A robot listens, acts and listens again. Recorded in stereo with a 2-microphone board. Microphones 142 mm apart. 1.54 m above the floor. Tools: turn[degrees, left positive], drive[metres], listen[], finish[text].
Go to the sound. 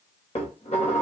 Thought: The dishes clattering: about 50° left or 130° left.
Action: turn[50]
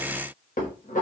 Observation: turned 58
Thought: So it is at 70° left.
Action: turn[70]
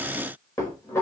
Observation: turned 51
Thought: The dishes clattering is now 20° left.
Action: turn[20]
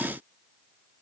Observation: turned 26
Action: listen[]
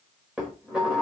Action: drive[1.0]
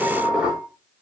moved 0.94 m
Action: drive[1.0]
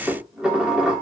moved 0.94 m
Action: drive[1.0]
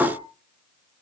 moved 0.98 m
Thought: The dishes clattering is now 10° right.
Action: turn[-10]
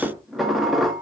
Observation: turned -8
Action: drive[1.0]
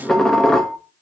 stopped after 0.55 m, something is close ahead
Action: finish[Arrived at the dishes clattering, straight ahead.]